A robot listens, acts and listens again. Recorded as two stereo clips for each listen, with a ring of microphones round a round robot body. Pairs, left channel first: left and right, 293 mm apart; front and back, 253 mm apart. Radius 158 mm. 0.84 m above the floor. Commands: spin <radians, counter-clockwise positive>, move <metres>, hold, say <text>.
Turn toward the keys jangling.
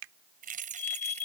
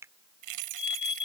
spin -2.79
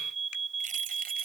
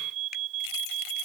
spin -0.44
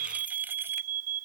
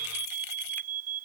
hold
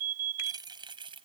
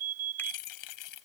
spin -0.26
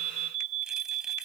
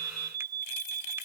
hold
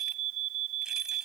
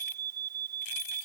hold
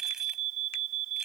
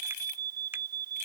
say Facing where the keys jangling came from. I can't hear it now.